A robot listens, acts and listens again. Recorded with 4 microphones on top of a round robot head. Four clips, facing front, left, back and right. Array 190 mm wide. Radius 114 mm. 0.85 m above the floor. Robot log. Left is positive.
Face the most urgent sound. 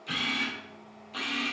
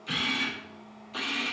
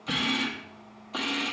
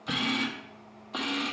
cmd idle
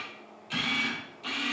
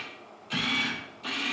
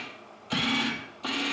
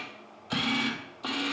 cmd idle
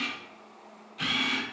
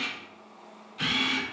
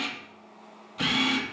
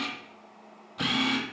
end: I can't make out anything urgent to turn to.